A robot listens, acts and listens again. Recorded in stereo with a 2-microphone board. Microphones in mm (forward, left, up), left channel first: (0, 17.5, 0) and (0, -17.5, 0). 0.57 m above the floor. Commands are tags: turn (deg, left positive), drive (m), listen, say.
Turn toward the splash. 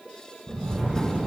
<turn deg="-90"/>
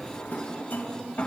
<say>I heard a splash from this way, but can't make it out now.</say>